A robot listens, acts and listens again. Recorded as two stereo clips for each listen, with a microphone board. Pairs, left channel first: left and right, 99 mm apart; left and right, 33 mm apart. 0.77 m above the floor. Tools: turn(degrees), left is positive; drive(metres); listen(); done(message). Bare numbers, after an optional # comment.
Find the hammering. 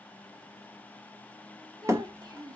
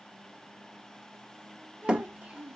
# The hammering: about 30° right or 150° right.
turn(-30)
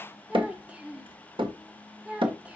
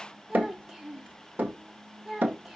# So it is at 120° right.
turn(-120)
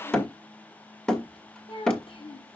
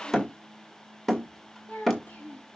# The hammering is now 10° left.
turn(10)
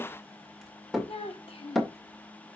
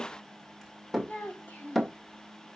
done("Found it: hammering, straight ahead, 1 to 2 m away.")